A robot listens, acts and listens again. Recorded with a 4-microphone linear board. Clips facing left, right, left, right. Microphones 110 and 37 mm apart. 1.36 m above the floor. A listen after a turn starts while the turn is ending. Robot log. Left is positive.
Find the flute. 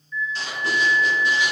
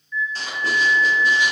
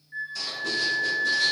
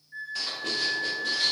cmd yaw +30
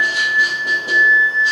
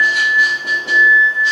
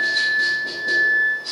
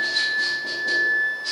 note: So it is at 20° right.
cmd yaw -20
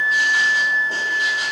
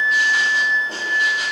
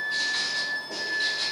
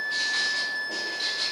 end: Found it: a flute, straight ahead.